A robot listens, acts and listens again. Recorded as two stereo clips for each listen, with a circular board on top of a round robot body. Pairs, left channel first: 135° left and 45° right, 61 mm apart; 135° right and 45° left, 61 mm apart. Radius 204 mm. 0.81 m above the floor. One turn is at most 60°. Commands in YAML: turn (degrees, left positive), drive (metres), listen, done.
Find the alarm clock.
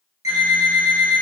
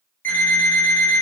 turn: -60
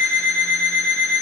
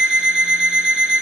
turn: -30
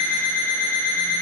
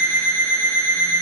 done: "Found it: an alarm clock, straight ahead."